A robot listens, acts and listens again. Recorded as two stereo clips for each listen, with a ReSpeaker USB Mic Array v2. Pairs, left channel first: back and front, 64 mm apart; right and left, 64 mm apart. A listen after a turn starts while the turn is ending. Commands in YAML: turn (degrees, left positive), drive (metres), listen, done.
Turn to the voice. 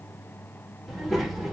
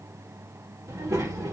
turn: 90
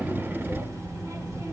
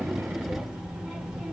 turn: 15
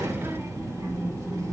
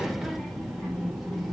done: "Facing the child speaking."